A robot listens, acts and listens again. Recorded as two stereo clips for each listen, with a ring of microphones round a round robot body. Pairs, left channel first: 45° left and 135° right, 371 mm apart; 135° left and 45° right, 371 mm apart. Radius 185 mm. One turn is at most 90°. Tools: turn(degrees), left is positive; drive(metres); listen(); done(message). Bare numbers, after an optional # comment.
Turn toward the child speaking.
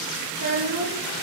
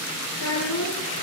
# The child speaking: 175° right.
turn(-90)
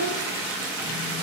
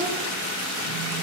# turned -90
# Nothing new. It was at 85° right.
turn(-85)
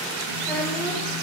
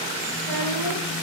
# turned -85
listen()
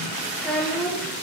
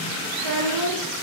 # The child speaking is now 40° right.
turn(-40)
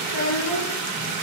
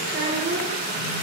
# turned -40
# The child speaking is now 15° left.
turn(15)
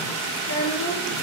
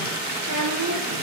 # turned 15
done("Found it: a child speaking, straight ahead, over 4 m away.")